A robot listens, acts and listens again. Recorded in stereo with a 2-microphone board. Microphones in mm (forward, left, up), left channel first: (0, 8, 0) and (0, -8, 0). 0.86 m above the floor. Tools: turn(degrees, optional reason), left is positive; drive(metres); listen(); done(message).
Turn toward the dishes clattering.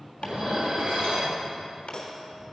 turn(degrees=-75, reason="The dishes clattering: about 75° right or 105° right.")
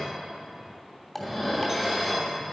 done("Facing the dishes clattering, 2 to 4 m away.")